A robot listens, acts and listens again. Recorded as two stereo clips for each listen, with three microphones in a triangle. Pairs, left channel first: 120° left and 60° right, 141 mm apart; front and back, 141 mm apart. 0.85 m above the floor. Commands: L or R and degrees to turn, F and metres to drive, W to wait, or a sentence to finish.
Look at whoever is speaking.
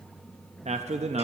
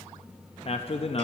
R35
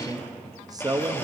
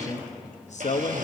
Found it: a man speaking, straight ahead.